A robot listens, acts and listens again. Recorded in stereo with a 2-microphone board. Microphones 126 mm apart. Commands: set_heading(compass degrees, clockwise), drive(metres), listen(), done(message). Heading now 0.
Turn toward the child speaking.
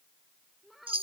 set_heading(330)
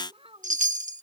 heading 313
set_heading(3)
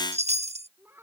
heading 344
set_heading(4)
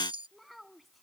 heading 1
done("Found it: a child speaking, straight ahead.")